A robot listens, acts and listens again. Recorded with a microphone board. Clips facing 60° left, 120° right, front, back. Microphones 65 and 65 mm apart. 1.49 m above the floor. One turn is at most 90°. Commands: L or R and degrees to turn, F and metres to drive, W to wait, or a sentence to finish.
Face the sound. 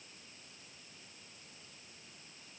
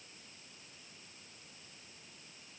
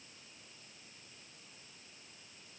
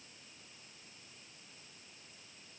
W
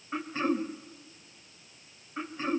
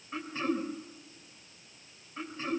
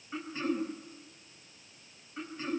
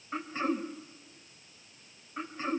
L90
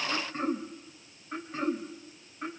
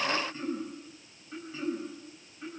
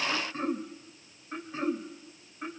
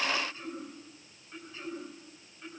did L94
L20
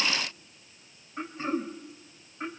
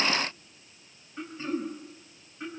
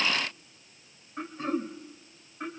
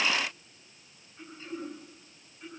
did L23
Facing the throat clearing.